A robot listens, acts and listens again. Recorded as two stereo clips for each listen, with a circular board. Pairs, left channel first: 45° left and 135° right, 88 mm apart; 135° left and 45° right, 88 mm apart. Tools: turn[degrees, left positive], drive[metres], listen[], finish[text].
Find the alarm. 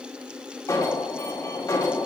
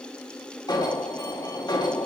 Thought: The alarm: 95° left.
Action: turn[95]
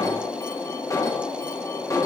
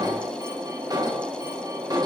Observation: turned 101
Action: finish[Found it: an alarm, straight ahead.]